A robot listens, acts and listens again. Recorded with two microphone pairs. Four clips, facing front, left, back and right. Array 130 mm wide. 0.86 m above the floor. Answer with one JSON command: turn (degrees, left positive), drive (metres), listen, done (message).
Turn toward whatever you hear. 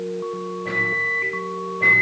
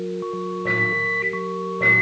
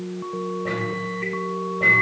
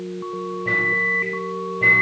{"turn": 105}
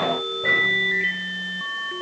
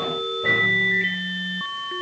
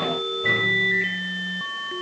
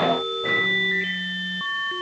{"done": "Facing the microwave."}